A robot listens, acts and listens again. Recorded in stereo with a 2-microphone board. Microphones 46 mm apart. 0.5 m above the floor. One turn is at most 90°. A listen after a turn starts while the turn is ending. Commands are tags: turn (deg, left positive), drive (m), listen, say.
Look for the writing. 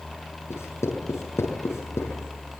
<turn deg="90"/>
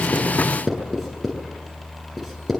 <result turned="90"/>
<say>Found it: writing, straight ahead, over 4 m away.</say>